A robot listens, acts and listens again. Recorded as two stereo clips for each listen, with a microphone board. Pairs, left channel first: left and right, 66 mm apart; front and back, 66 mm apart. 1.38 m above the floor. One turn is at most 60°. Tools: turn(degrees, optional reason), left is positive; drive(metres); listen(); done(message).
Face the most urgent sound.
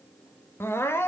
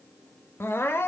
turn(degrees=40, reason="The crying: 40° left.")
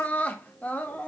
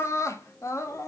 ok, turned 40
turn(degrees=25, reason="The crying is now 25° left.")
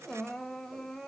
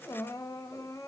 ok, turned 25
done("Found it: crying, straight ahead.")